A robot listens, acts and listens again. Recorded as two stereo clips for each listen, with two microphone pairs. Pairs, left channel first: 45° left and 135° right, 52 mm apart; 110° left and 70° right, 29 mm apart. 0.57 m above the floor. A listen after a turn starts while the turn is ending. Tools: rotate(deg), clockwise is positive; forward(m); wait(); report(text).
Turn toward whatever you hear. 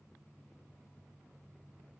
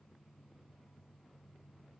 wait()
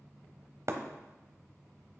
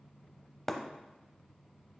rotate(165)
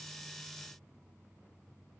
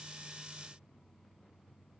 report("I heard breaking glass from this way, but can't make it out now.")